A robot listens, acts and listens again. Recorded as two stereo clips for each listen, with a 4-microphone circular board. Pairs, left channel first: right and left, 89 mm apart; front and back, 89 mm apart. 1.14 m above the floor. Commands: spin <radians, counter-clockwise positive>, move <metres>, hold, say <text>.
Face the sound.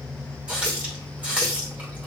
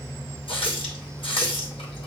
spin 0.26
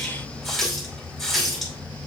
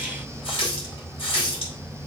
say Found it: a running tap, straight ahead, 2 to 4 m away.